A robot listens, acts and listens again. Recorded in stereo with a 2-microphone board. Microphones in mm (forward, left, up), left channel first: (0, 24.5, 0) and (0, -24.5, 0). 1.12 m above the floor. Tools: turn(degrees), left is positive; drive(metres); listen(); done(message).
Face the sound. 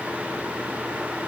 listen()
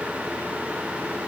listen()
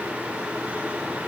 done("I can't make out anything to turn to.")